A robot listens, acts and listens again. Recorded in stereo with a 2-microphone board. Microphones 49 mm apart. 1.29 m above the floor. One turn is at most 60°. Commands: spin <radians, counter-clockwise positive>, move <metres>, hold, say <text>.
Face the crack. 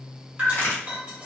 spin 0.70
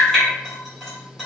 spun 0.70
hold
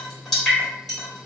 say I heard a crack, but can't make it out now. It was about straight ahead or 100° left.